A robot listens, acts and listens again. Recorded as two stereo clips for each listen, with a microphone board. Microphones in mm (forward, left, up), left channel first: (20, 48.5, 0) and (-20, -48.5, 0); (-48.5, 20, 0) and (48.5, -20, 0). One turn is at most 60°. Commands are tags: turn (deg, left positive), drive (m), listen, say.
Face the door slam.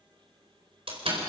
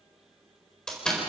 <turn deg="-60"/>
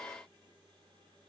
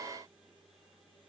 <turn deg="-60"/>
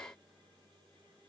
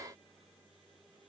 <say>I heard a door slam from this way, but can't make it out now.</say>